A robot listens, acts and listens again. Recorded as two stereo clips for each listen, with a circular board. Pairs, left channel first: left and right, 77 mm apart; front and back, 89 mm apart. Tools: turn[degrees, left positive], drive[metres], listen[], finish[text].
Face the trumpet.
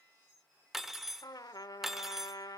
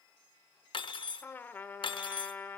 Thought: The trumpet: 65° left.
Action: turn[65]
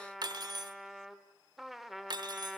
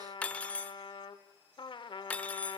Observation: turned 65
Action: finish[Found it: a trumpet, straight ahead, 1 to 2 m away.]